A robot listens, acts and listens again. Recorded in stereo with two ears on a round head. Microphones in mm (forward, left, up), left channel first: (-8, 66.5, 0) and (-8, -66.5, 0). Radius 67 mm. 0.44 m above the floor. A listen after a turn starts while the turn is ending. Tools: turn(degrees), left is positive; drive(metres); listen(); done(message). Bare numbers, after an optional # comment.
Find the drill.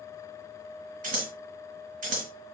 listen()
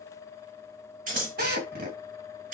# The drill: about 65° right or 115° right.
turn(-65)
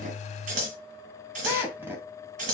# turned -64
# So it is at 15° right.
turn(-15)
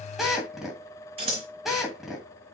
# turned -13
done("Found it: a drill, straight ahead.")